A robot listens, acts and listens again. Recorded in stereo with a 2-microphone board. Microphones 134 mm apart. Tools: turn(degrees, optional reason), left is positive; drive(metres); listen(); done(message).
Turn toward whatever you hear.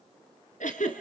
turn(degrees=70, reason="The giggle: about 70° left or 110° left.")
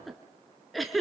done("Facing the giggle, 2 to 4 m away.")